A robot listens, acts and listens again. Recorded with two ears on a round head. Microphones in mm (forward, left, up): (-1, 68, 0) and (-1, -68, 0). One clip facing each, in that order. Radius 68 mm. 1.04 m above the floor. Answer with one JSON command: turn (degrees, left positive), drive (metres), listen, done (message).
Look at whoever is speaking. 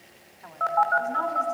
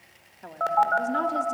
{"turn": -40}
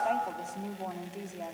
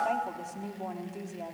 {"done": "Facing the woman speaking."}